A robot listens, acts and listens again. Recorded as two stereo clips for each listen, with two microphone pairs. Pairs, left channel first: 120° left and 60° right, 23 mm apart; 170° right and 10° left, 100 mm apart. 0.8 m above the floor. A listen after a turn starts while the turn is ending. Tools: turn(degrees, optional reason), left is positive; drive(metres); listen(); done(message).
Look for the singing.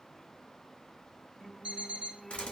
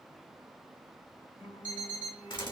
turn(degrees=-140, reason="The singing: 140° right.")
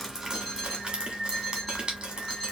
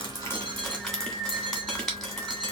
done("Facing the singing.")